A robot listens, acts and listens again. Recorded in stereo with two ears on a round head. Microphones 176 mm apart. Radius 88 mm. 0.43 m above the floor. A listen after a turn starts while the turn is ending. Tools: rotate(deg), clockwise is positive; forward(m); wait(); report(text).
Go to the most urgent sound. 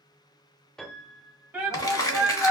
rotate(30)
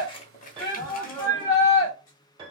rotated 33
rotate(-20)
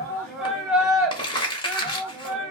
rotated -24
forward(1.0)
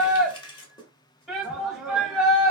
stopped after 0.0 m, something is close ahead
report("Something is in my way. I am facing the shout but have not reached it.")